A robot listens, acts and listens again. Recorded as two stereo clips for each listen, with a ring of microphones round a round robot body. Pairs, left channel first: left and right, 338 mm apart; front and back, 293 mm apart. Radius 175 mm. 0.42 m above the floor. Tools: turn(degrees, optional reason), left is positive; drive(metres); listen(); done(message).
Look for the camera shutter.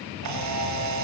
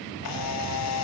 turn(degrees=-45, reason="The camera shutter: 45° right.")
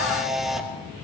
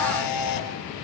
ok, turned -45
done("Facing the camera shutter, 2 to 4 m away.")